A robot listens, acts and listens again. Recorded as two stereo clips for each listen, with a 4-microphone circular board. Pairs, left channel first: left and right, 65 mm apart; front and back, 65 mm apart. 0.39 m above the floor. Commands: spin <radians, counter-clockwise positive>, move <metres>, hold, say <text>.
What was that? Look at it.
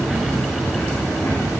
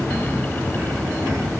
hold
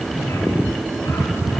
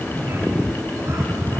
hold
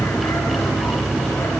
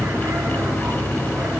say I can't make out anything.